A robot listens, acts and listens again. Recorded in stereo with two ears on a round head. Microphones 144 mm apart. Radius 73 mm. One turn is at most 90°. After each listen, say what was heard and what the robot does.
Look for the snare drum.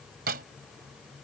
The snare drum: about 65° right or 115° right. Turn 65° right.
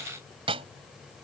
So it is at 40° right. Turn 40° right.
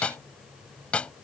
The snare drum is now 10° left. Turn 10° left.
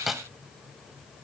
Facing the snare drum.